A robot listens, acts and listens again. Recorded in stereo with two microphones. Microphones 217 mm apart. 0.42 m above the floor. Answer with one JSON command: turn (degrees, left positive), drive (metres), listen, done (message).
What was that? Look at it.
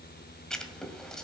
{"turn": 30}
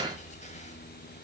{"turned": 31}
{"listen": true}
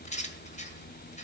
{"turn": 145}
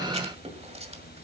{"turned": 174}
{"turn": -30}
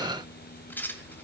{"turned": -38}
{"turn": 10}
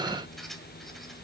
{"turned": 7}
{"done": "Found it: writing, straight ahead, 1 to 2 m away."}